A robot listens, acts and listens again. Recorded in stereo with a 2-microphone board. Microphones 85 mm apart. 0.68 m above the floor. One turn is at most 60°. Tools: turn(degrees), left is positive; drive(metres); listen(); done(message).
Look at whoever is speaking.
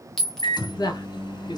turn(degrees=50)
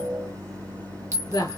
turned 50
turn(degrees=60)
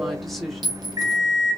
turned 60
done("Found it: a woman speaking, straight ahead, 1 to 2 m away.")